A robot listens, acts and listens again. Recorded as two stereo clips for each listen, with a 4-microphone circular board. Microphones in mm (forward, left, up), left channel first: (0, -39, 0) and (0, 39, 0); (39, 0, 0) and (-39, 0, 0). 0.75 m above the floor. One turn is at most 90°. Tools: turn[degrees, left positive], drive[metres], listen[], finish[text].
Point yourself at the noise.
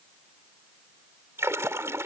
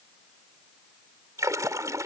Thought: The splash: 140° left.
Action: turn[90]
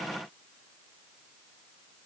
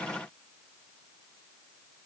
Thought: Nothing new. It was at 50° left.
Action: turn[50]
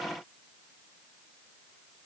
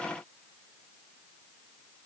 Action: finish[I heard a splash from this way, but can't make it out now.]